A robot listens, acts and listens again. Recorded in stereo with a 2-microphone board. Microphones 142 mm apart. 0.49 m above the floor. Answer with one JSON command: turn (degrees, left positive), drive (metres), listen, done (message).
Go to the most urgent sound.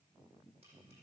{"listen": true}
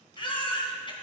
{"turn": 35}
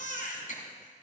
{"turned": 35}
{"turn": 105}
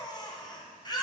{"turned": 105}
{"turn": 30}
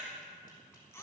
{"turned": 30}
{"turn": 20}
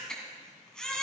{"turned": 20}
{"drive": 1.0}
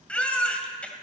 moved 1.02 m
{"turn": 10}
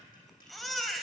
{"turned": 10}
{"drive": 1.0}
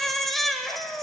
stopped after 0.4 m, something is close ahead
{"done": "I am next to the baby crying."}